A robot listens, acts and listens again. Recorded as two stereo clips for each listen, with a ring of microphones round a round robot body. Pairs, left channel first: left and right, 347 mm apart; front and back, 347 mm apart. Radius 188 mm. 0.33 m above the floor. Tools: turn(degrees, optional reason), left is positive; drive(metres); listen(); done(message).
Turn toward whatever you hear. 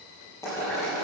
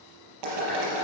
turn(degrees=175, reason="The boiling: 175° left.")
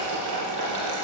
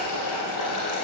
turn(degrees=-55, reason="The boiling is now 55° right.")
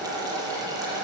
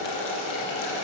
turn(degrees=-10, reason="The boiling is now 10° right.")
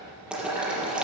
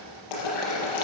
done("Found it: boiling, straight ahead.")